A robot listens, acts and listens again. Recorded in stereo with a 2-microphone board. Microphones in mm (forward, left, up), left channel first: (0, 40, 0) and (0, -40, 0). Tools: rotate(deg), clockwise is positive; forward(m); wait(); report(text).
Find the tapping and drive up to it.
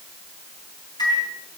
wait()
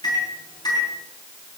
wait()
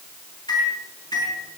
report("I can't make out tapping to turn to.")